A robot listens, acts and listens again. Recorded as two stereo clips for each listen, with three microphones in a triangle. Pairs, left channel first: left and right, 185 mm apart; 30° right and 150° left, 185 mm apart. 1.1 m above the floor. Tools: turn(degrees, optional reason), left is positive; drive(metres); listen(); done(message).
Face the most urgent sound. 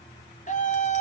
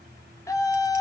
turn(degrees=40, reason="The scream: 40° left.")
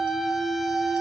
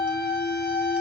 done("Found it: a scream, straight ahead, 2 to 4 m away.")